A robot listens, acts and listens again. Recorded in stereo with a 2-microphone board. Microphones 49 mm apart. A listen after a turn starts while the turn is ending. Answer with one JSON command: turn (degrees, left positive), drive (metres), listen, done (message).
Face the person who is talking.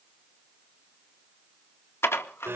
{"listen": true}
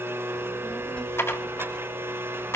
{"turn": 25}
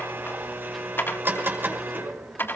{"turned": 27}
{"done": "Facing the child speaking."}